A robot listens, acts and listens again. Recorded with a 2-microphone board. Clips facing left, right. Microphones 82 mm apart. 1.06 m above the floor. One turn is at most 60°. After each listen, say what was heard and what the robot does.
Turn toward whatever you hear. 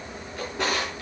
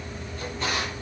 Turn 60° left.
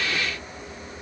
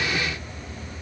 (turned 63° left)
Nothing new. It was at 25° left. Turn 25° left.
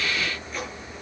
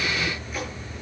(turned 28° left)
Facing the drawer, over 4 m away.